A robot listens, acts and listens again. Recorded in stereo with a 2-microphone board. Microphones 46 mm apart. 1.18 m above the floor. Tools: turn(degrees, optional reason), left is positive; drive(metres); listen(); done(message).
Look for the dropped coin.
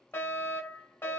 listen()
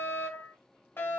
listen()
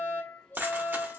turn(degrees=-45, reason="The dropped coin: about 45° right or 135° right.")
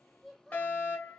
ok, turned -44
listen()
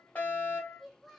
done("I heard a dropped coin, but can't make it out now. It was about straight ahead or 95° right.")